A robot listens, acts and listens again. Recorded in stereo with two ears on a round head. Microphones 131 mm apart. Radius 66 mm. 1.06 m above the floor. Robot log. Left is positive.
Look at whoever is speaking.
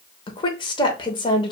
note: The woman speaking: about 35° left or 145° left.
cmd yaw +35
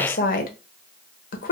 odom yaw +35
note: So it is at 105° left.
cmd yaw +105
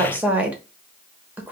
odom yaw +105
note: The woman speaking is now 10° right.
cmd yaw -10
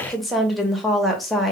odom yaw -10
end: Facing the woman speaking.